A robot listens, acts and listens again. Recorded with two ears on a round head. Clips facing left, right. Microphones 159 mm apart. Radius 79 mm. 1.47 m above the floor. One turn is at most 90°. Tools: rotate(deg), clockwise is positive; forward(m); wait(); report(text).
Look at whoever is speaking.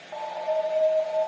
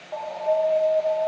wait()
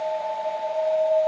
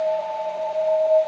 wait()
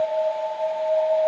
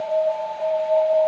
report("I can't make out anyone speaking, only an alarm.")